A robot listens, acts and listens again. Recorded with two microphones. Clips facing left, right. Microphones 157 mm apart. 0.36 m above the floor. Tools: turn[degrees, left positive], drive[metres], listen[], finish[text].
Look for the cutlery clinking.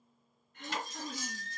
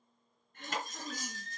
Thought: The cutlery clinking: about 50° right or 130° right.
Action: turn[-50]
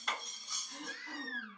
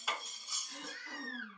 Action: finish[Found it: cutlery clinking, straight ahead, under 1 m away.]